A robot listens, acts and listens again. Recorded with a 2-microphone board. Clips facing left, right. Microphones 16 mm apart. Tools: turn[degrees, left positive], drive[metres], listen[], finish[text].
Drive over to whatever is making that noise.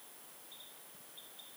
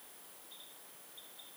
Action: listen[]
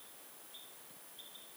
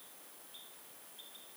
Action: listen[]
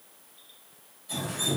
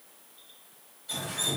Thought: The dripping: about 60° right or 120° right.
Action: turn[-60]
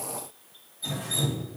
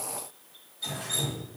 Thought: So it is at 55° right.
Action: turn[-55]
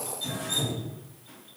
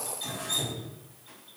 Action: drive[1.0]
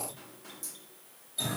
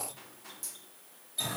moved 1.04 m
Action: drive[1.0]
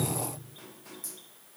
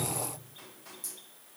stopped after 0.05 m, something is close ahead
Action: finish[I am next to the dripping.]